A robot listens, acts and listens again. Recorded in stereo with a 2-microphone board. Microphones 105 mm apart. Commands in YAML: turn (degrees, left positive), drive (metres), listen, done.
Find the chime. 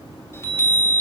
turn: 25
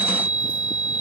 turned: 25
turn: 125
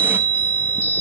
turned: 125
turn: 15
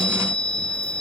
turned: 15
done: "Facing the chime."